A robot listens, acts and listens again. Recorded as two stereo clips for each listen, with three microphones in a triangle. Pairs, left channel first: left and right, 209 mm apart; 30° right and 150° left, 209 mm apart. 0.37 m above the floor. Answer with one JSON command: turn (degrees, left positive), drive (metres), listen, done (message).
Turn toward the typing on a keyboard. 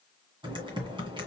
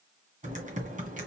{"turn": -155}
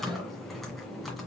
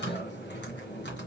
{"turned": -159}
{"done": "Facing the typing on a keyboard."}